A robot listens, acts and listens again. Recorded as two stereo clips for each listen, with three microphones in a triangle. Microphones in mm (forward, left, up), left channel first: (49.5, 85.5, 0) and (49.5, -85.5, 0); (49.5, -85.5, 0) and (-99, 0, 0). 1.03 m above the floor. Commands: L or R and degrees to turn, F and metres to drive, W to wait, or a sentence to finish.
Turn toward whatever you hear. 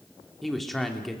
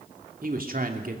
L180
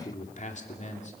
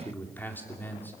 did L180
L50
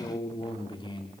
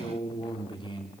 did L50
L30
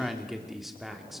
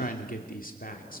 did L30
Found it: a man speaking, straight ahead, 2 to 4 m away.